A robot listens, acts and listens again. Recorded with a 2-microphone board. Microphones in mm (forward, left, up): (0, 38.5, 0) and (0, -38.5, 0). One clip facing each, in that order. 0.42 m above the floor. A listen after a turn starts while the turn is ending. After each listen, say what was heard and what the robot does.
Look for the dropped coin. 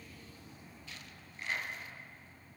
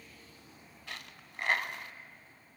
The dropped coin: about 75° right or 105° right. Turn 75° right.
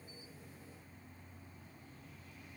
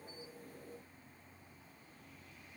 Keep listening.
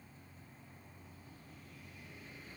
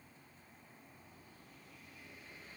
I heard a dropped coin, but can't make it out now. It was about straight ahead or 30° right.